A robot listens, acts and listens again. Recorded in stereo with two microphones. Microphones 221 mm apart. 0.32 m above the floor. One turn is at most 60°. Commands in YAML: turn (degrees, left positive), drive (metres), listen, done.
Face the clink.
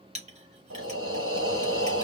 turn: -30
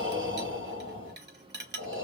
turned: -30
turn: -60
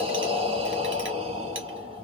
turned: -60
turn: -55
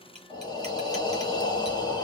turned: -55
listen: true
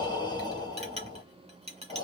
turn: -35
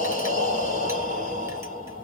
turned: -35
listen: true
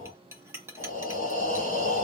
turn: -15
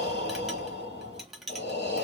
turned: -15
done: "Facing the clink."